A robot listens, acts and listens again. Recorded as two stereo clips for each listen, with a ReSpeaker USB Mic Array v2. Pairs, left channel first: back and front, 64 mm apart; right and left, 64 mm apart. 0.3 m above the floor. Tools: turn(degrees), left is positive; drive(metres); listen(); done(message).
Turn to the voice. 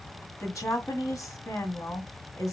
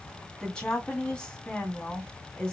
turn(degrees=-160)
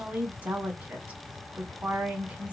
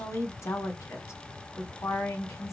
turn(degrees=-65)
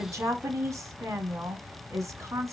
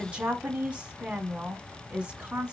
turn(degrees=25)
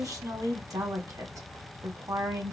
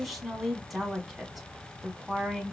done("Found it: a woman speaking, straight ahead, 2 to 4 m away.")